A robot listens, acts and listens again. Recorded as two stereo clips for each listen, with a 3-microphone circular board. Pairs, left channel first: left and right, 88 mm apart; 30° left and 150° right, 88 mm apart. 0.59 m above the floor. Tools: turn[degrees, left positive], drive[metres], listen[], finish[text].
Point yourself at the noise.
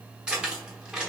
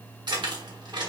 Thought: The keys jangling: 170° right.
Action: turn[-170]
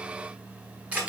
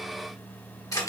Thought: The keys jangling is now 20° right.
Action: turn[-20]
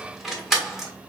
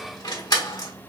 Action: finish[Found it: keys jangling, straight ahead.]